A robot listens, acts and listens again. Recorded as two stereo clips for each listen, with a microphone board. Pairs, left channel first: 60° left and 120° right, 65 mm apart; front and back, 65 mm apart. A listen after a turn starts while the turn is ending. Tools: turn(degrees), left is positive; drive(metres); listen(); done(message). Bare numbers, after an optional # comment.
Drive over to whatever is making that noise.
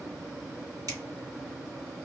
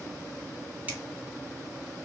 # The finger snap: 110° right.
turn(-110)
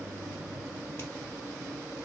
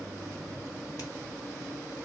listen()
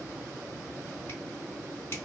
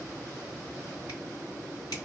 # The finger snap is now 15° left.
turn(15)
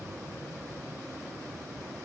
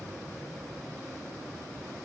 listen()
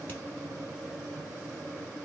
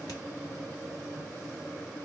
listen()
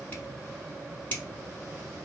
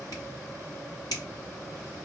drive(1.0)
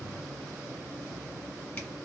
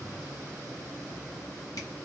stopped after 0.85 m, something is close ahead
listen()
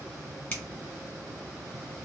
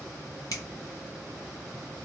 done("Arrived at the finger snap, straight ahead.")